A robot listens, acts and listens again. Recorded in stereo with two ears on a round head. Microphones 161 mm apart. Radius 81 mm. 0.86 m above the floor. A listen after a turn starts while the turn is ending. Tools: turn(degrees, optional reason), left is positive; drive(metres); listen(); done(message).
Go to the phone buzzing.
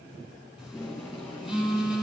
turn(degrees=-30)
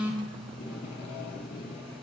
listen()
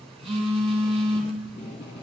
turn(degrees=-145, reason="So it is at 145° right.")
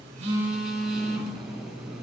drive(metres=1.0)
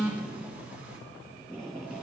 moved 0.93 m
drive(metres=1.0)
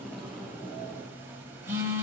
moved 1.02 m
turn(degrees=-15, reason="The phone buzzing is now 15° right.")
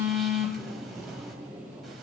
drive(metres=1.0)
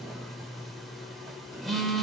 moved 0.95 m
drive(metres=1.0)
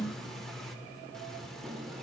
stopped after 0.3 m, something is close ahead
listen()
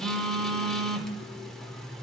done("Arrived at the phone buzzing, straight ahead.")